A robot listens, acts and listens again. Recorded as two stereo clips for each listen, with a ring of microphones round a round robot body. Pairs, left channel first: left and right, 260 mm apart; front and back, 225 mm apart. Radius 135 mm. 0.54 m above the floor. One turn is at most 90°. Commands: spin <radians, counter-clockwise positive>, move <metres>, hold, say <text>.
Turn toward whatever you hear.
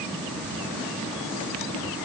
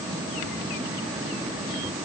hold
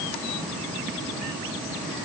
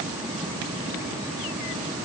hold
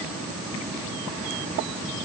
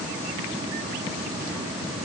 say I can't make out anything.